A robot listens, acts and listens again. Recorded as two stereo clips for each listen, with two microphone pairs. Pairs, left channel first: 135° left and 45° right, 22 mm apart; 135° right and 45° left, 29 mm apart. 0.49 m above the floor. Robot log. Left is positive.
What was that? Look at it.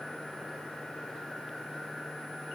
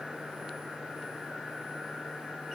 cmd idle
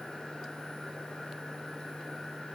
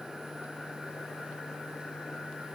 cmd idle
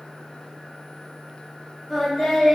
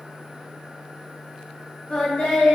note: The singing: 160° right.
cmd yaw -160
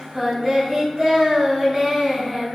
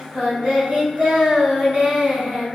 note: The singing is now 15° left.
cmd yaw +15
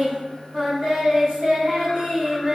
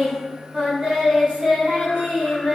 end: Found it: singing, straight ahead.